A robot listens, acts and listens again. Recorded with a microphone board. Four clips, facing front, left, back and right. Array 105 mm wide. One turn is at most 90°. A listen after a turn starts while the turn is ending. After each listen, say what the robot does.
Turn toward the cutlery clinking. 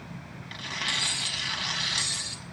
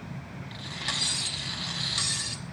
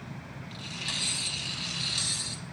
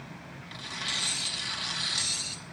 Turn 75° left.
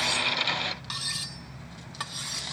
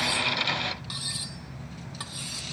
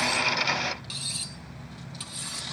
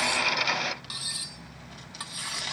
Found it: cutlery clinking, straight ahead, 1 to 2 m away.